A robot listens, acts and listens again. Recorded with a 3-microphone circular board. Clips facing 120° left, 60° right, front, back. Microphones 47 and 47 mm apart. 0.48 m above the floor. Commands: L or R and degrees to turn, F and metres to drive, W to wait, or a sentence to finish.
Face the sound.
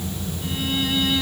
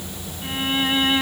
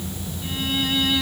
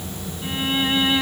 R115
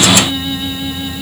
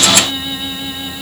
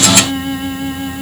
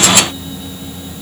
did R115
L30
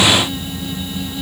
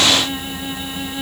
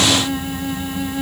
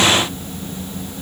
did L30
W
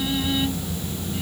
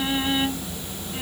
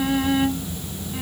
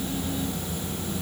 Found it: a violin, straight ahead.